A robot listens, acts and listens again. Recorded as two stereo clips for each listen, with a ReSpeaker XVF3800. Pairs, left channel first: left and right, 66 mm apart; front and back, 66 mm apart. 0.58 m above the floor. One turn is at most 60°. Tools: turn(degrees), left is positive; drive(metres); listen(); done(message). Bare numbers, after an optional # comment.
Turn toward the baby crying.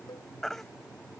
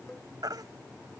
# The baby crying: 175° left.
turn(60)
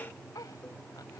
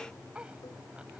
# Nothing new. It was at 115° left.
turn(60)
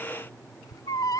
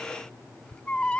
# The baby crying is now 70° left.
turn(60)
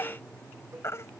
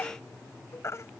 # The baby crying is now 40° left.
turn(40)
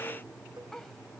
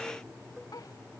listen()
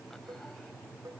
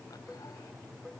listen()
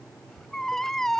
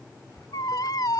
done("Facing the baby crying.")